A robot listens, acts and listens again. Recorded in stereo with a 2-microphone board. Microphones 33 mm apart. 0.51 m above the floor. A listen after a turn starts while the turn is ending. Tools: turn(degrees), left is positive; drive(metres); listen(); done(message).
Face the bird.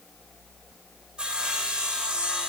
listen()
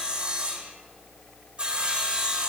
listen()
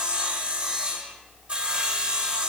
done("I can't make out a bird, only sawing.")